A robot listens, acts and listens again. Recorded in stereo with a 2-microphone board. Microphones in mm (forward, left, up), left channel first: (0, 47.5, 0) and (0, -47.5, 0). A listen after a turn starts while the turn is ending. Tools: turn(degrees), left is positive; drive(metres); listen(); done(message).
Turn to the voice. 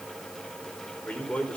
turn(degrees=30)
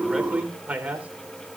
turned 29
turn(degrees=-15)
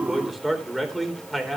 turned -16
done("Found it: a man speaking, straight ahead.")